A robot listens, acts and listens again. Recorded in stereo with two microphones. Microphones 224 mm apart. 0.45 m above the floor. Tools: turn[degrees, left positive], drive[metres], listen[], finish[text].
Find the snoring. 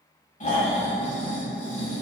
Thought: The snoring: about 35° left or 145° left.
Action: turn[35]
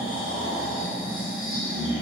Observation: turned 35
Thought: So it is at 110° left.
Action: turn[110]
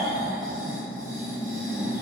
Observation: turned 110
Thought: The snoring is now 15° left.
Action: turn[15]
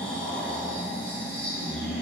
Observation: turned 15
Action: finish[Found it: snoring, straight ahead, under 1 m away.]